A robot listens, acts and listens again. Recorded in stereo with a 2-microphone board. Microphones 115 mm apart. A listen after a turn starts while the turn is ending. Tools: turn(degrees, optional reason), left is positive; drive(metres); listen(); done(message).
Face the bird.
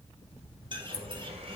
turn(degrees=-45, reason="The bird: about 45° right or 135° right.")
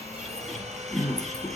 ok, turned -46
done("Found it: a bird, straight ahead, 2 to 4 m away.")